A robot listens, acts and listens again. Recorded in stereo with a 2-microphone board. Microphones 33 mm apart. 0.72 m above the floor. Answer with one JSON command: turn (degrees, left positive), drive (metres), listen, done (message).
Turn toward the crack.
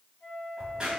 {"turn": -25}
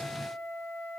{"listen": true}
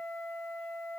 {"done": "I heard a crack, but can't make it out now. It was about straight ahead or 130° right."}